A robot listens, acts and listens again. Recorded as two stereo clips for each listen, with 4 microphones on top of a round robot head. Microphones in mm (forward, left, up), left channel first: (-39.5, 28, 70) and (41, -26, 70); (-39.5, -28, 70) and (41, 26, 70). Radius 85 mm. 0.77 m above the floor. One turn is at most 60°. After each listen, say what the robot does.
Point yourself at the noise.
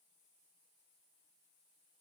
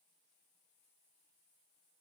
Keep listening.
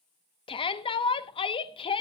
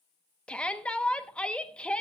Turn 60° left.
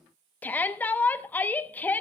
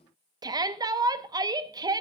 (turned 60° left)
Turn 60° left.
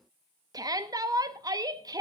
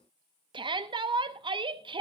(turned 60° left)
Turn 10° left.
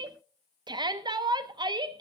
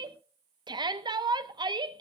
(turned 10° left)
Found it: a shout, straight ahead, 1 to 2 m away.